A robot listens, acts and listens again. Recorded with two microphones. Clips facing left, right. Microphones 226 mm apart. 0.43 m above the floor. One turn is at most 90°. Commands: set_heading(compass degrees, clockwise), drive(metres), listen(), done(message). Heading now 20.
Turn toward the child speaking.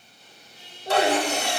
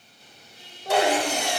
set_heading(85)
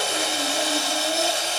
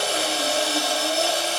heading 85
listen()
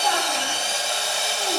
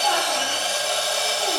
listen()
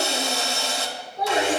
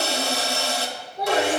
set_heading(125)
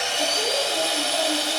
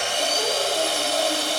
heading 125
listen()
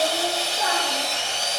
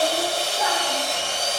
listen()
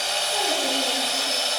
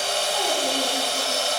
done("I heard a child speaking from this way, but can't make it out now.")